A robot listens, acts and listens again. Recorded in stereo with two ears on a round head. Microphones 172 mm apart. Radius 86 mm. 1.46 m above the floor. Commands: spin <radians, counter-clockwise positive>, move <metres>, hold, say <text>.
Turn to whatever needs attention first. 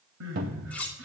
spin -1.57
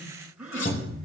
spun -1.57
say Found it: crying, straight ahead, over 4 m away.